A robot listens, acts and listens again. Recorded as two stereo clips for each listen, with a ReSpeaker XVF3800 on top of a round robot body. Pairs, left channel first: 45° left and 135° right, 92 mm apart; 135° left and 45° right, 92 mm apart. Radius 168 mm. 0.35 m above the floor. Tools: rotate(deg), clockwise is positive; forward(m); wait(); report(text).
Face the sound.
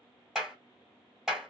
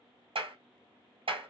rotate(50)
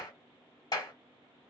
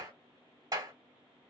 report("Found it: a clap, straight ahead.")